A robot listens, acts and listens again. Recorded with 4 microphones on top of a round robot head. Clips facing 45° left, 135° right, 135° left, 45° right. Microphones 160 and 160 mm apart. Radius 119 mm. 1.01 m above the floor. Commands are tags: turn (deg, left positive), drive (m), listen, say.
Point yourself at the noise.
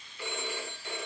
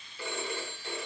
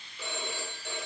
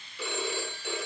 <turn deg="-75"/>
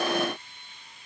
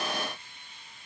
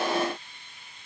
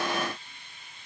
<listen/>
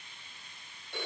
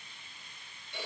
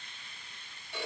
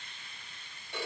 <say>Found it: a phone ringing, straight ahead.</say>